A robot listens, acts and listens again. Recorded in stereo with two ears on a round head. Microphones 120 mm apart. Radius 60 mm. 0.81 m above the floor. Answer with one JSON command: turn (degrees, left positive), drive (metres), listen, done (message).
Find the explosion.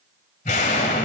{"turn": 55}
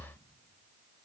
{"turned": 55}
{"listen": true}
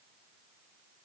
{"done": "I heard an explosion, but can't make it out now. It was about straight ahead or 70° left."}